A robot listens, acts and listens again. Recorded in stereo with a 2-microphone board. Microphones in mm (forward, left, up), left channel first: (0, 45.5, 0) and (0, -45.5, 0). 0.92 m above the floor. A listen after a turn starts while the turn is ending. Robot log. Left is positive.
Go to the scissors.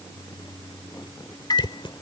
note: The scissors: about 65° left or 115° left.
cmd yaw +65
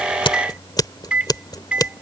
note: So it is at 50° left.
cmd yaw +50
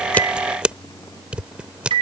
note: The scissors is now 10° right.
cmd yaw -10
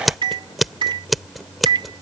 cmd fwd 1.0
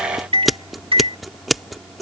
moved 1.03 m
cmd fwd 1.0
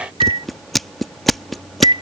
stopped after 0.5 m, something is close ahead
end: Arrived at the scissors, straight ahead.